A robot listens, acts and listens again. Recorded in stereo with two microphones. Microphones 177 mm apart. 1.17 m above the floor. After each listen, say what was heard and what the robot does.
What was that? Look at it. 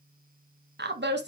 Turn 90° right.
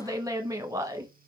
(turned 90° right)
So it is at 20° right. Turn 20° right.
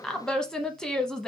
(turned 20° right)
Found it: a woman speaking, straight ahead, under 1 m away.